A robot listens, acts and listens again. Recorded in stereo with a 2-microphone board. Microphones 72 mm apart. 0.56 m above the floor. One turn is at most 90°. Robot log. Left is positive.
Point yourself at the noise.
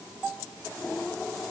cmd idle
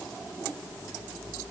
cmd idle
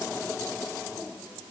end: I can't make out anything.